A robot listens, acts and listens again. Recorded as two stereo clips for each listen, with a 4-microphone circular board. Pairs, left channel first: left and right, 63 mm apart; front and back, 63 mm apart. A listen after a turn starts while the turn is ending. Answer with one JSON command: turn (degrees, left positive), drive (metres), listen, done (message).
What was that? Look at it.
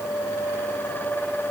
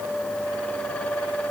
{"listen": true}
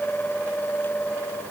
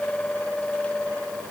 {"listen": true}
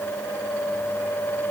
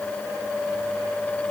{"done": "I can't make out anything."}